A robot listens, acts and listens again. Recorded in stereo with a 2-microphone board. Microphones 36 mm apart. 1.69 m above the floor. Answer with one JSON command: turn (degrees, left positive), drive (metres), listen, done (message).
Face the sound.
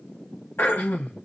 {"turn": 65}
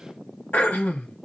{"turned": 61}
{"turn": 55}
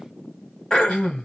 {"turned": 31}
{"turn": 30}
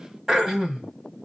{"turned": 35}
{"turn": -10}
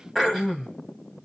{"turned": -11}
{"done": "Found it: throat clearing, straight ahead."}